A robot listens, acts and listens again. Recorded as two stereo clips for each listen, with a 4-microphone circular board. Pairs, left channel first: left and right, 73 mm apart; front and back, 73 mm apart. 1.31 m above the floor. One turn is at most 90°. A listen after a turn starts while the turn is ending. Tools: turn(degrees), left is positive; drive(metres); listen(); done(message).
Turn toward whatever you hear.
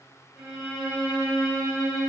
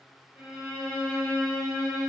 turn(degrees=-90)
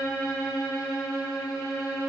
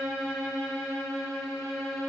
turn(degrees=-60)
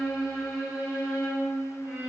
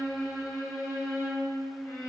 done("Facing the violin.")